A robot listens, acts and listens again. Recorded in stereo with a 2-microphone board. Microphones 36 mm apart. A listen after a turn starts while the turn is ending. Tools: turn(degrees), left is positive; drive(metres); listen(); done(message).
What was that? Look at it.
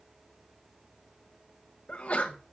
turn(degrees=40)
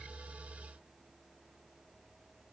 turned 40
listen()
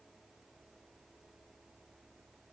done("I heard a sneeze, but can't make it out now. It was about straight ahead or 100° left.")